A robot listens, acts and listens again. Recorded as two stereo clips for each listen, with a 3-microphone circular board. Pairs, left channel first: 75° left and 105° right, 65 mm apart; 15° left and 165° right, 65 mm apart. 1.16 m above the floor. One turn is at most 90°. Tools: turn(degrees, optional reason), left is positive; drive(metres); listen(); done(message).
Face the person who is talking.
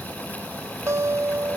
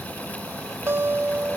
listen()
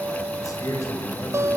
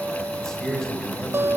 turn(degrees=90, reason="The man speaking: 100° left.")
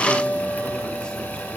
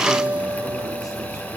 turn(degrees=10, reason="Nothing new. It was at 10° left.")
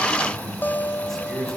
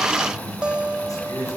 turn(degrees=-10, reason="The man speaking is now 10° right.")
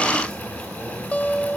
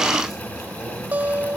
listen()
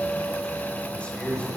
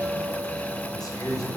done("Facing the man speaking, over 4 m away.")